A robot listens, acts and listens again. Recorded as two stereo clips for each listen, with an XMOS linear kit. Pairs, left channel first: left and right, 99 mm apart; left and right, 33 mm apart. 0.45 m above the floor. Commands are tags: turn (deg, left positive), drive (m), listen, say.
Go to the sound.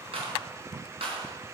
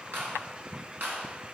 <turn deg="-90"/>
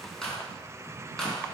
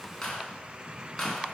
<drive m="1.0"/>
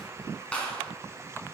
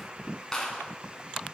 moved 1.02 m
<turn deg="15"/>
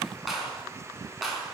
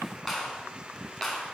<drive m="1.0"/>
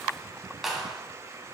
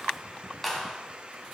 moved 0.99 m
<drive m="1.0"/>
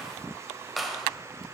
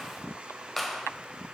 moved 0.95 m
<drive m="1.0"/>
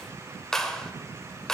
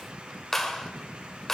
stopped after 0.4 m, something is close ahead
<say>I am next to the clap.</say>